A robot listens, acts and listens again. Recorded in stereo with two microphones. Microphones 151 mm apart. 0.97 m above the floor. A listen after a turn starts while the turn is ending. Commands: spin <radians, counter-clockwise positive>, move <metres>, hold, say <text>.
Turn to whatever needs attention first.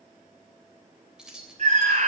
spin -0.87
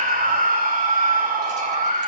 spin -1.31
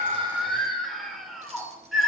say Facing the scream, 2 to 4 m away.